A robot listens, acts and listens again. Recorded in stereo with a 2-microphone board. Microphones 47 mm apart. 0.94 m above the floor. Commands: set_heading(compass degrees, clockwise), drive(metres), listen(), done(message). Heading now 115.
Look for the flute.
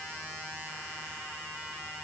listen()
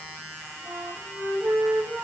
set_heading(185)
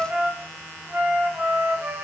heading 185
set_heading(220)
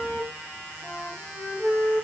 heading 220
done("Found it: a flute, straight ahead.")